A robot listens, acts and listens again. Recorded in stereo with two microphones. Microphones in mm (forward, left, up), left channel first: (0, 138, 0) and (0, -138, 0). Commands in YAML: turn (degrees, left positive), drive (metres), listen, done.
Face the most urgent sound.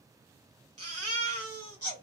turn: -55
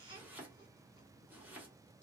turn: -20
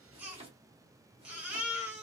done: "Facing the baby crying."